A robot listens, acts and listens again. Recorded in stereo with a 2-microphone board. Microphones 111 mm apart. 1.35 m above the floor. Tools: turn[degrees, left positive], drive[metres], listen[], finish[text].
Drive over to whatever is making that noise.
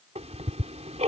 Thought: The ticking: about 70° right or 110° right.
Action: turn[-70]
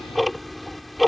Action: drive[1.0]
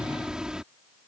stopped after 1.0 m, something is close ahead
Action: finish[Blocked. The ticking is further on, straight ahead.]